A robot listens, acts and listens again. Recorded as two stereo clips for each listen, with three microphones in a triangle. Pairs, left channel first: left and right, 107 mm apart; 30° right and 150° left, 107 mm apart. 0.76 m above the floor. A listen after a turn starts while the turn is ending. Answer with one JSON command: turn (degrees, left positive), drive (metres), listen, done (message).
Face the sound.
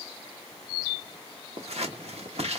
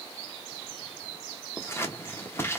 {"turn": -95}
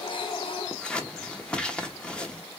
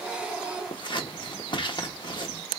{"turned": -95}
{"turn": 10}
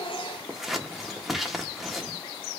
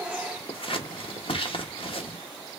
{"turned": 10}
{"done": "Facing the scissors."}